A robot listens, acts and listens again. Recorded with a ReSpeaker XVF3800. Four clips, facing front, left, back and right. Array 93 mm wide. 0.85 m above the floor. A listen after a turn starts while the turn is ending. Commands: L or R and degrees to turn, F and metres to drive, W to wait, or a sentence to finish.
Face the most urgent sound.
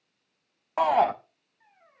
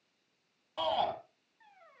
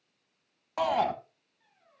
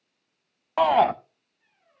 R60
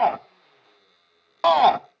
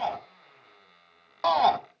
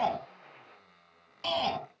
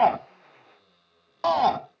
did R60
Facing the shout.